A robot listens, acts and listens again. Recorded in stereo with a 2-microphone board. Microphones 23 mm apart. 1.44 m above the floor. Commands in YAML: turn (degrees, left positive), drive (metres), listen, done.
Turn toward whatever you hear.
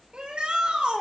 turn: -50
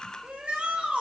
turn: -80
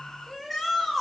done: "Facing the shout, over 4 m away."